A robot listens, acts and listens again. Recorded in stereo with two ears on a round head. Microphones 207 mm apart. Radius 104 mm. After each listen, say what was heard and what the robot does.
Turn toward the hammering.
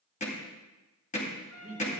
The hammering: about 30° left or 150° left. Turn 30° left.
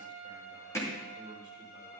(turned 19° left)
So it is at 15° left. Turn 15° left.
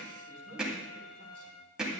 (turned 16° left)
Facing the hammering.